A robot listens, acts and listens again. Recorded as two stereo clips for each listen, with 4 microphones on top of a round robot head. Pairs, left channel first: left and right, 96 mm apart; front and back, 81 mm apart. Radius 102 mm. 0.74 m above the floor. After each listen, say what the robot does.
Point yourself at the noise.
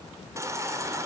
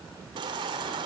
Turn 150° right.
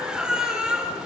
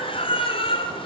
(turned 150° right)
Facing the baby crying.